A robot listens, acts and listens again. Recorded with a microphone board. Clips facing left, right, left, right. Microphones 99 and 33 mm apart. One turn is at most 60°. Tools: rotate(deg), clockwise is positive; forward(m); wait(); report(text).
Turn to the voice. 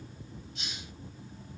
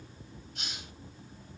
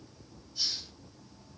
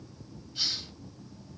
wait()
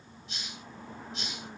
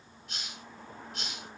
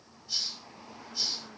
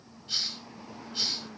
wait()
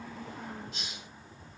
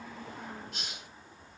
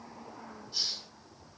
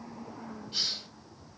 report("I can't make out anyone speaking, only a hiss.")